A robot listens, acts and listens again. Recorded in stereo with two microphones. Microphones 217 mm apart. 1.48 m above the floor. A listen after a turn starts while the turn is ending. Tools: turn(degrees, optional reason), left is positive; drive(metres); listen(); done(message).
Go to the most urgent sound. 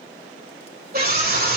turn(degrees=-45, reason="The scream: about 45° right or 135° right.")
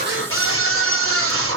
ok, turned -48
turn(degrees=-85, reason="So it is at 85° right.")
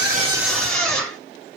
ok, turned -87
drive(metres=1.0)
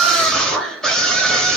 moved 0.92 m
drive(metres=1.0)
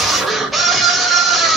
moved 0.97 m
drive(metres=1.0)
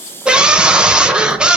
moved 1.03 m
drive(metres=1.0)
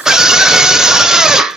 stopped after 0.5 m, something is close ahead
done("Arrived at the scream, straight ahead.")